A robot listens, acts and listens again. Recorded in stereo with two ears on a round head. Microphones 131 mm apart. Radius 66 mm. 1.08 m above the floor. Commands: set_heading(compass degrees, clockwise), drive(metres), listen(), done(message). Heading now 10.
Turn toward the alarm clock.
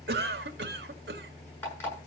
set_heading(355)
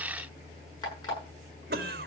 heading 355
set_heading(205)
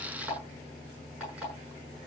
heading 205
set_heading(215)
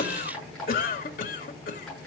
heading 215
done("Found it: an alarm clock, straight ahead, over 4 m away.")